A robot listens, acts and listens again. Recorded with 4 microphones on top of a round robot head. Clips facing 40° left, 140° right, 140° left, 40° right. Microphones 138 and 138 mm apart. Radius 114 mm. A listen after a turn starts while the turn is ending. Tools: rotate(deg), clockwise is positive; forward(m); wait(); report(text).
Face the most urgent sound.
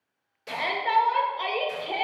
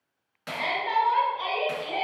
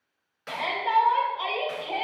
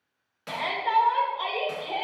rotate(-55)
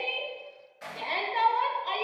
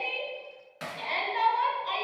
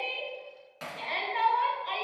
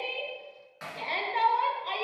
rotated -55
rotate(-10)
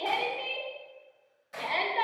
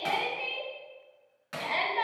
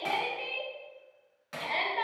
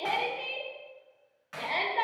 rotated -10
report("Found it: a shout, straight ahead, 1 to 2 m away.")